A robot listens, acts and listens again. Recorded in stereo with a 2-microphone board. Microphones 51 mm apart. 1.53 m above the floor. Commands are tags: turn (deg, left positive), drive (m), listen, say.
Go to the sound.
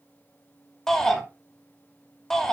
<turn deg="30"/>
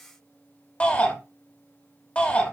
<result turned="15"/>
<turn deg="155"/>
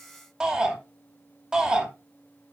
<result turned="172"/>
<turn deg="-15"/>
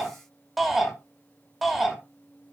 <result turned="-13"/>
<drive m="1.0"/>
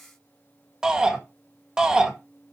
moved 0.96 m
<turn deg="-15"/>
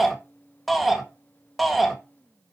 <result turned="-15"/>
<drive m="1.0"/>
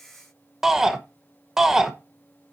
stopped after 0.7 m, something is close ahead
<turn deg="-10"/>
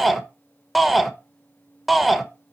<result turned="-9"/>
<say>I am next to the shout.</say>